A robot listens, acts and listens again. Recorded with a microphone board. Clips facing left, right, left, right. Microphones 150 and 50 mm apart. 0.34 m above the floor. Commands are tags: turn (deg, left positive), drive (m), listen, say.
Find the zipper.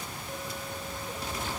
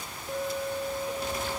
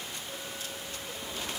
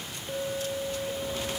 <listen/>
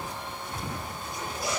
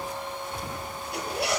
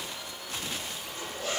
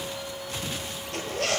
<turn deg="-90"/>
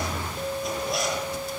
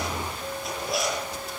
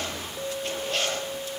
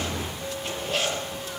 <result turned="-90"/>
<say>Found it: a zipper, straight ahead.</say>